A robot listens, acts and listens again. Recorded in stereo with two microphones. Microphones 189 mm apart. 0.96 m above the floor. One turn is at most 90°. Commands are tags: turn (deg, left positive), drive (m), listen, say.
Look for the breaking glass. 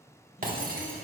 <turn deg="-50"/>
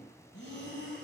<listen/>
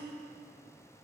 <say>I heard breaking glass, but can't make it out now. It was about straight ahead or 80° right.</say>